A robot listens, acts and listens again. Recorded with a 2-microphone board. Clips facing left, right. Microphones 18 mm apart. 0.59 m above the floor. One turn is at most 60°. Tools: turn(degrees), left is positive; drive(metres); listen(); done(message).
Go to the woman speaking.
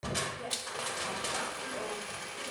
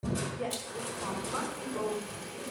turn(degrees=-45)
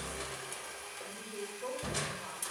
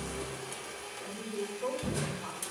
drive(metres=1.0)
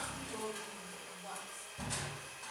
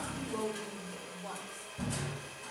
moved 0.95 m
drive(metres=1.0)
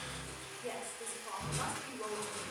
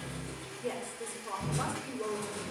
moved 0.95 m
drive(metres=1.0)
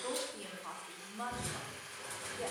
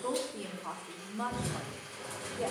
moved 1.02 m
turn(degrees=-10)
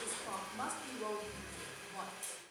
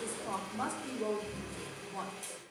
drive(metres=1.0)
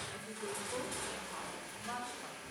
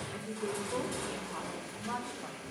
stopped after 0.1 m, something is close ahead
done("I am next to the woman speaking.")